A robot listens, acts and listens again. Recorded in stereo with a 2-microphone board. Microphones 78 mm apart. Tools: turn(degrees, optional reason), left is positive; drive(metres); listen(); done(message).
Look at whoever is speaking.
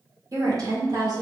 turn(degrees=-60, reason="The woman speaking: about 60° right or 120° right.")
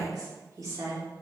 turn(degrees=-40, reason="So it is at 40° right.")
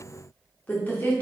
turn(degrees=25, reason="The woman speaking is now 25° left.")
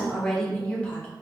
turn(degrees=15, reason="The woman speaking is now 15° left.")
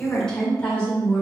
turn(degrees=20, reason="The woman speaking is now 20° left.")
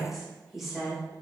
done("Found it: a woman speaking, straight ahead, 1 to 2 m away.")